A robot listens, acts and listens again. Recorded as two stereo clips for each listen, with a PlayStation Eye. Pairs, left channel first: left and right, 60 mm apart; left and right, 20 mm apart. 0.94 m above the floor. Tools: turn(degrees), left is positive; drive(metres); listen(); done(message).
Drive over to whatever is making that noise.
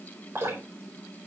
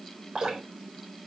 turn(degrees=-50)
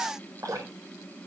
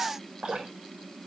turn(degrees=-80)
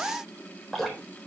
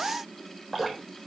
drive(metres=1.0)
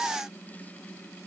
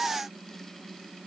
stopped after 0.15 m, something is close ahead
listen()
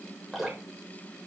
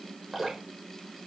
done("Something is in my way. I am facing the dripping but have not reached it.")